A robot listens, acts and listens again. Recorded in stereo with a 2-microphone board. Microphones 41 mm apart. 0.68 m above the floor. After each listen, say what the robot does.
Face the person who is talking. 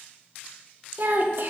Turn 55° right.
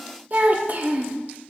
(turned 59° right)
Turn 55° right.
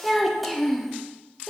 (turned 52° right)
Found it: a child speaking, straight ahead, under 1 m away.